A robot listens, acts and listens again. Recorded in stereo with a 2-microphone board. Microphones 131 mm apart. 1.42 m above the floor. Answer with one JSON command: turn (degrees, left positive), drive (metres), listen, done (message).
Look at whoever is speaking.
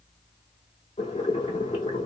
{"listen": true}
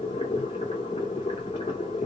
{"listen": true}
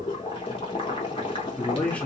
{"turn": 30}
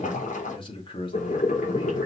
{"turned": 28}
{"turn": 140}
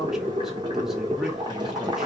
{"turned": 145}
{"listen": true}
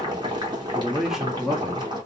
{"done": "Facing the man speaking, 2 to 4 m away."}